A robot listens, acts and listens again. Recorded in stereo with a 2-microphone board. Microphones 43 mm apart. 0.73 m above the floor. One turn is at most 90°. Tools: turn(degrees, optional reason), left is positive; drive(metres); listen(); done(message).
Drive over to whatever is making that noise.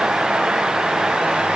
listen()
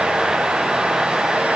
listen()
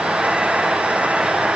done("I can't make out anything.")